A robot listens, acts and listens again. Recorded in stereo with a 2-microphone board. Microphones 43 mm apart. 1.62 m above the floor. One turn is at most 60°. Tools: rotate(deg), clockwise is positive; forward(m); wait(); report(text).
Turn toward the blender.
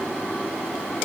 wait()
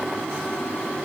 wait()
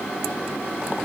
report("I can't make out a blender to turn to.")